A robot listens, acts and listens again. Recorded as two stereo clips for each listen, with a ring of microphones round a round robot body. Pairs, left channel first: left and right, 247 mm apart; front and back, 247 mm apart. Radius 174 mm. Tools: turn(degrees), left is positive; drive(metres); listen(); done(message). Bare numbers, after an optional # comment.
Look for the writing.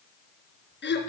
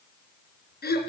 listen()
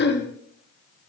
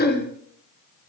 listen()
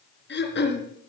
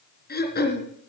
done("I can't make out writing, only throat clearing.")